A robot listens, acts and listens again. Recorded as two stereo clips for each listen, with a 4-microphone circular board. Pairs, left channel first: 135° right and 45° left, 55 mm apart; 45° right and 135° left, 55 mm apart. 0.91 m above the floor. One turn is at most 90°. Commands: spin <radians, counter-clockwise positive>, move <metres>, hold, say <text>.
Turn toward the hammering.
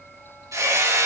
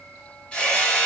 spin 0.52
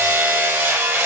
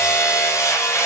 spin -0.17
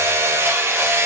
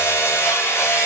say Found it: hammering, straight ahead.